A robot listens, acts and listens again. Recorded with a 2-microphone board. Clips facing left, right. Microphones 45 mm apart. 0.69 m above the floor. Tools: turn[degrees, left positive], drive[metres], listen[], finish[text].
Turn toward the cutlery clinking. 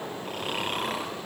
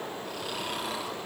Action: listen[]
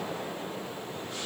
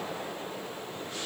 Action: listen[]
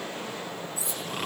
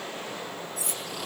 Thought: The cutlery clinking: about 60° right or 120° right.
Action: turn[-60]
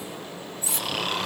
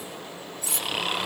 Thought: So it is at 60° right.
Action: turn[-60]
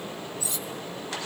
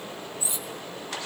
Thought: The cutlery clinking is now 25° right.
Action: turn[-25]
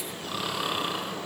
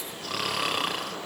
Action: listen[]
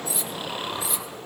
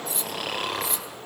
Action: finish[Found it: cutlery clinking, straight ahead, 2 to 4 m away.]